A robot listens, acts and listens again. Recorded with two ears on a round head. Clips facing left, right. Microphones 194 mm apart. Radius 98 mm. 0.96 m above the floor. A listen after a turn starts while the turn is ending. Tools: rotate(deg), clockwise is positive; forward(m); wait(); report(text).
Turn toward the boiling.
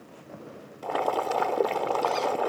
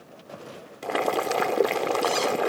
rotate(25)
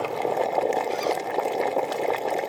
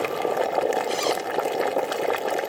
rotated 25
rotate(10)
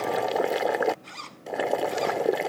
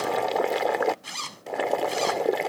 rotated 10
report("Facing the boiling.")